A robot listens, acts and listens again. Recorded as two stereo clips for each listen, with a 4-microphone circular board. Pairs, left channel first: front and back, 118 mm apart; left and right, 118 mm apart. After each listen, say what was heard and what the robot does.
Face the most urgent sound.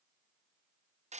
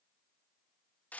Keep listening.
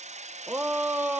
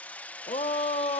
The shout: 110° left. Turn 110° left.
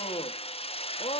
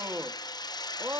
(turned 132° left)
The shout is now 25° right. Turn 25° right.
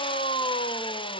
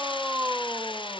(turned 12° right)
The shout is now 15° right. Turn 15° right.
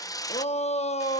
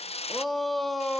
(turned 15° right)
Found it: a shout, straight ahead, 1 to 2 m away.